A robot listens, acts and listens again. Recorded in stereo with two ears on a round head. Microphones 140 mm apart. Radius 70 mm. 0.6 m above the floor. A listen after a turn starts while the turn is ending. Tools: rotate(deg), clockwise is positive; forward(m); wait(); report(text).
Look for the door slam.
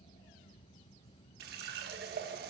wait()
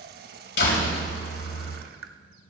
rotate(-90)
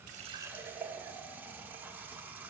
report("I heard a door slam from this way, but can't make it out now.")